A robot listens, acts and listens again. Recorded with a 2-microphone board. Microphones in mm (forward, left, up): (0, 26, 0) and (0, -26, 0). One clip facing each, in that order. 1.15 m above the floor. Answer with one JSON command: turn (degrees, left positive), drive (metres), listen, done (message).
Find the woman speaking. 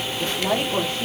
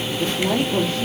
{"turn": 25}
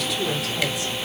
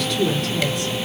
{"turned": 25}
{"done": "Facing the woman speaking."}